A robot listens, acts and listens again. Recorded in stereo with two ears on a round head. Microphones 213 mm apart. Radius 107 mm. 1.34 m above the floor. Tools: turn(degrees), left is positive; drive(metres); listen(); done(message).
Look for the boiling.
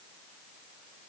listen()
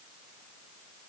listen()
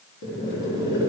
turn(degrees=50)
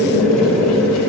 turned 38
turn(degrees=85)
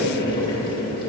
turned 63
turn(degrees=20)
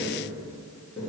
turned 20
done("Facing the boiling.")